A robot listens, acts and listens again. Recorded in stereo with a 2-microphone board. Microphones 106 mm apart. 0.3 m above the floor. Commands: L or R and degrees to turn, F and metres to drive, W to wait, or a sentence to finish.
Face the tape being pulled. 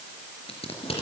L70
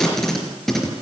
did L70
Facing the tape being pulled, 2 to 4 m away.